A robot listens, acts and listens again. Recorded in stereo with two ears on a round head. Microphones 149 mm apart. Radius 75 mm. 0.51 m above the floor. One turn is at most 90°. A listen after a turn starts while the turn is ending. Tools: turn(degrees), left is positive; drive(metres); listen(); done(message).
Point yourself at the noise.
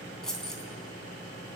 turn(degrees=30)
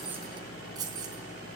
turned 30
turn(degrees=-25)
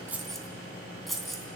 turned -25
done("Found it: keys jangling, straight ahead, 2 to 4 m away.")